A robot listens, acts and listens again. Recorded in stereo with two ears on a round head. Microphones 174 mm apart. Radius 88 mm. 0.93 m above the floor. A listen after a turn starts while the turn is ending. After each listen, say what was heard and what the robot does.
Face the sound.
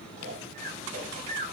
The snoring: about 35° right or 145° right. Turn 35° right.
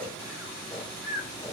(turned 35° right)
Found it: snoring, straight ahead.